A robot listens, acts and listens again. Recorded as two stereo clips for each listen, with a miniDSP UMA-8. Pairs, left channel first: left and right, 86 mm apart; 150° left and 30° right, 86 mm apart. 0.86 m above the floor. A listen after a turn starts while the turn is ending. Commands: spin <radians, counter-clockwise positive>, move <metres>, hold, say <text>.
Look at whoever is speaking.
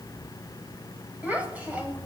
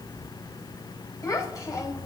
spin -2.79
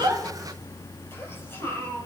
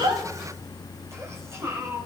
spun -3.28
spin 0.44
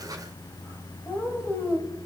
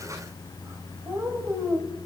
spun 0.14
spin 0.35
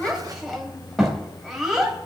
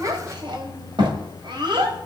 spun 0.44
say Facing the child speaking.